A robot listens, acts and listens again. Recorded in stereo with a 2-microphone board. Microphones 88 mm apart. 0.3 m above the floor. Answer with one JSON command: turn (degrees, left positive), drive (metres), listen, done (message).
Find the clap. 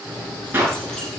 {"turn": -25}
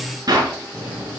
{"turn": -130}
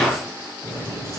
{"done": "Facing the clap, over 4 m away."}